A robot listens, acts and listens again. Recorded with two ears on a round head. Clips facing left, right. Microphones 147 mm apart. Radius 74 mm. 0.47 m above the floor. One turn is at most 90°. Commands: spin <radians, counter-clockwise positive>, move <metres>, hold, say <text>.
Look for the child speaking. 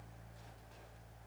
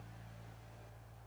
hold
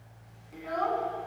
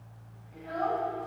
spin 1.57
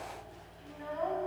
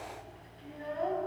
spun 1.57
spin -0.52
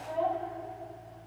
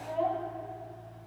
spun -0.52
say Facing the child speaking.